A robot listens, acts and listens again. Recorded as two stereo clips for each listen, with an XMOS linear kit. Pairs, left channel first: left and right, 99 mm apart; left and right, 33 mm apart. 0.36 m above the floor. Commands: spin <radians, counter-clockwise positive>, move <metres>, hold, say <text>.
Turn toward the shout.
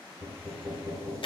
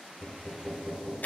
hold
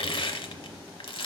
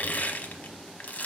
hold
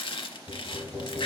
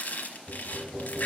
say I can't make out a shout, only crushing and knocking.